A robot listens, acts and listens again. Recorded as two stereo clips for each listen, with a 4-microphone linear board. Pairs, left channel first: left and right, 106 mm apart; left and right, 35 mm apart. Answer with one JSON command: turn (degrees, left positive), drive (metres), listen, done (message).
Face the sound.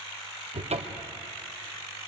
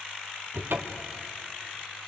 {"turn": -90}
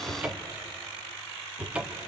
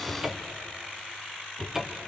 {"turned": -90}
{"turn": -10}
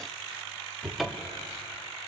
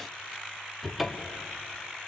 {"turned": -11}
{"done": "Found it: a cupboard door, straight ahead, 1 to 2 m away."}